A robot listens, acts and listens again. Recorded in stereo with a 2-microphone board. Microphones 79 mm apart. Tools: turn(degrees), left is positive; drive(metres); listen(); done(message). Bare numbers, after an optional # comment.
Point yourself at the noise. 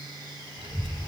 turn(-90)
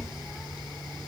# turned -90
done("Facing the child speaking, 2 to 4 m away.")